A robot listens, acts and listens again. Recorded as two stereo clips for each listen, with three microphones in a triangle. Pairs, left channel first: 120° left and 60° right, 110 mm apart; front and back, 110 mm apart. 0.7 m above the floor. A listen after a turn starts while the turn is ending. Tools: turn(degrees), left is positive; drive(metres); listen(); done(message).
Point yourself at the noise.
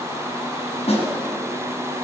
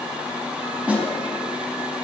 turn(degrees=100)
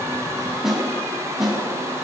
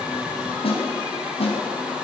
turn(degrees=25)
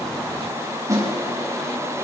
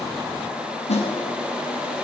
done("Facing the snare drum.")